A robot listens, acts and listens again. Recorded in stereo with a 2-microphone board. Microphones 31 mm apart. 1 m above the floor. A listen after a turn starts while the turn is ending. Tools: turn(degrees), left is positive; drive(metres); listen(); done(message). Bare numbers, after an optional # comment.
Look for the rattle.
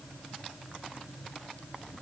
listen()
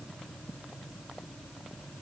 listen()
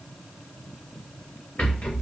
# The rattle: about 45° left or 135° left.
turn(45)
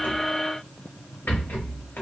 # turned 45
# So it is at 90° left.
turn(90)
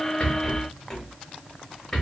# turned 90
# The rattle is now 20° left.
turn(20)
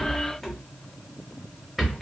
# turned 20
done("Found it: a rattle, straight ahead.")